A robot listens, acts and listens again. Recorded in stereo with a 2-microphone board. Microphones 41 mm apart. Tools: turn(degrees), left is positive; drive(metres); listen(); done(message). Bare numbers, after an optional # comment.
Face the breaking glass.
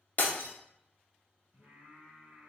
# The breaking glass: about 50° left or 130° left.
turn(50)
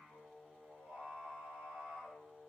listen()
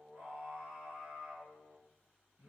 done("I heard breaking glass, but can't make it out now. It was about straight ahead or 80° left.")